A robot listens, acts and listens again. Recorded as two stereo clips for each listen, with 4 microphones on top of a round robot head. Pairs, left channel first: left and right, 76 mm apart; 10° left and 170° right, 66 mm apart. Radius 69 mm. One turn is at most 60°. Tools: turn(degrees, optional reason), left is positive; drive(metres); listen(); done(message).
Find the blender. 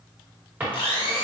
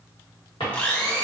turn(degrees=60, reason="The blender: 80° left.")
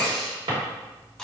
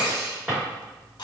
done("Facing the blender.")